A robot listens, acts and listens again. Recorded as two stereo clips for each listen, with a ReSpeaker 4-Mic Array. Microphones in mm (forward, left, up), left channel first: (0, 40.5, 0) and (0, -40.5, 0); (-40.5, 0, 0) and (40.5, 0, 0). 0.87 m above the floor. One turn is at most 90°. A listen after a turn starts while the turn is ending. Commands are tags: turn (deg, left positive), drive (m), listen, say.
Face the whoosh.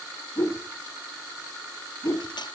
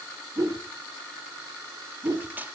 <turn deg="35"/>
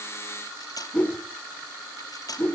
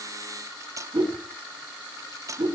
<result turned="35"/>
<turn deg="20"/>
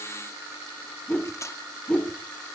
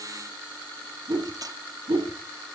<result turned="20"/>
<turn deg="10"/>
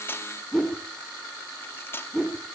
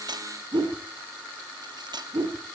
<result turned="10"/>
<say>Facing the whoosh, 2 to 4 m away.</say>